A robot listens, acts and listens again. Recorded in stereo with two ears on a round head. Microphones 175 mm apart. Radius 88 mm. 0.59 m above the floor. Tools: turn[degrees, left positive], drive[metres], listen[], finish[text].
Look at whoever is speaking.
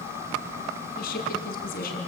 Thought: The woman speaking: about 50° left or 130° left.
Action: turn[50]
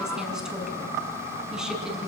Action: listen[]
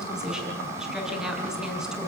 Action: finish[Found it: a woman speaking, straight ahead, over 4 m away.]